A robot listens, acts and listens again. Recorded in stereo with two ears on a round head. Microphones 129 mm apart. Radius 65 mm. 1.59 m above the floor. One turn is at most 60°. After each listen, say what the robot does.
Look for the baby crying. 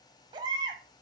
Turn 30° right.
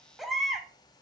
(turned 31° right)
Found it: a baby crying, straight ahead.